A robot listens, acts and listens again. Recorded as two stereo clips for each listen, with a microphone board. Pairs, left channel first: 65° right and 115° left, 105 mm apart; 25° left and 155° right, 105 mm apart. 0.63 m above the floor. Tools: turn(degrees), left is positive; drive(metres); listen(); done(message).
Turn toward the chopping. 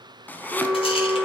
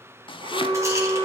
done("Facing the chopping, under 1 m away.")